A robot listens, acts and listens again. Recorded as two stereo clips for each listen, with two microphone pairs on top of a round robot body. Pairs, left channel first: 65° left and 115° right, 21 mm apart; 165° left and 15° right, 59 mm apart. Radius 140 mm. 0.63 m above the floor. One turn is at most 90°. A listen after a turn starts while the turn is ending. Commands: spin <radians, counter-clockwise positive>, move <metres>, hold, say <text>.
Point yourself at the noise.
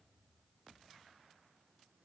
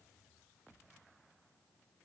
hold
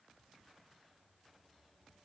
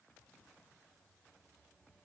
hold
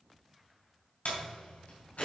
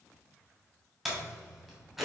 spin 1.31
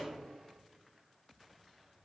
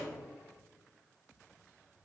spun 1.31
say I heard a door slam from this way, but can't make it out now.